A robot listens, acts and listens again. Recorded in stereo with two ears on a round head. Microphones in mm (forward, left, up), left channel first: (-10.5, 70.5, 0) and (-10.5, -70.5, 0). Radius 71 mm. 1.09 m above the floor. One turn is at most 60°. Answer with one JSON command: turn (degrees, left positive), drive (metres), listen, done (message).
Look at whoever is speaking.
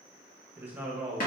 {"turn": -30}
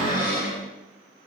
{"listen": true}
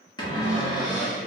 {"listen": true}
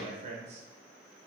{"turn": -60}
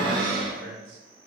{"turn": -60}
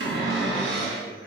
{"turn": -20}
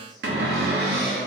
{"listen": true}
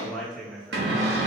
{"done": "Facing the man speaking."}